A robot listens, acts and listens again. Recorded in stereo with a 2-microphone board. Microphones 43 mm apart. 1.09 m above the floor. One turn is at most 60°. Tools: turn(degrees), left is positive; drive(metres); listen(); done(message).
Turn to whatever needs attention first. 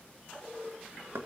listen()
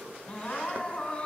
turn(degrees=25)
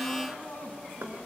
turn(degrees=60)
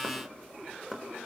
turn(degrees=60)
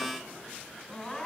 turn(degrees=20)
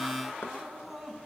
done("Facing the crying.")